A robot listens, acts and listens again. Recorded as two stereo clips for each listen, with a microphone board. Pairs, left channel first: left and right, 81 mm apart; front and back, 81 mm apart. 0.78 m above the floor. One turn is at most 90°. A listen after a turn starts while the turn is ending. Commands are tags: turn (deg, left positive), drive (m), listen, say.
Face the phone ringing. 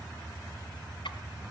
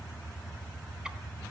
<listen/>
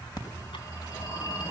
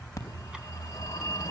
<turn deg="55"/>
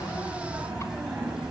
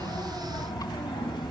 <turn deg="-10"/>
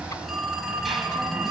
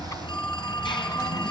<say>Found it: a phone ringing, straight ahead, 2 to 4 m away.</say>